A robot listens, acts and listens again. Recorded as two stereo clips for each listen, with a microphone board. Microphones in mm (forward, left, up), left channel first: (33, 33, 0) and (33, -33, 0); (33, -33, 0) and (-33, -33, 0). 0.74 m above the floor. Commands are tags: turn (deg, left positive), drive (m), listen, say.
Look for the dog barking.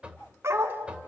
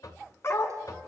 <turn deg="-45"/>
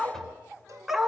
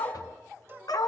<say>Facing the dog barking, 2 to 4 m away.</say>